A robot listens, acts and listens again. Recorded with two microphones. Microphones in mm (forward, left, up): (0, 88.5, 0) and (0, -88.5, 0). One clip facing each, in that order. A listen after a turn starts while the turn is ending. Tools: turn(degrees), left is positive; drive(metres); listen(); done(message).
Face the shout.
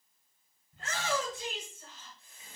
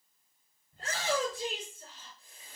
turn(degrees=-40)
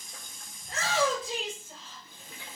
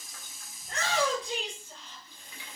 done("Facing the shout, over 4 m away.")